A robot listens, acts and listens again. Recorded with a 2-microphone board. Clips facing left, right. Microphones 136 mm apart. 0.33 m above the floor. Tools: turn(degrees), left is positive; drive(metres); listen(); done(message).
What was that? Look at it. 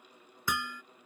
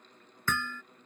turn(degrees=30)
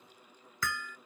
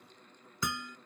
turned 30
turn(degrees=-20)
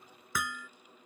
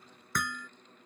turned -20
done("Found it: hammering, straight ahead.")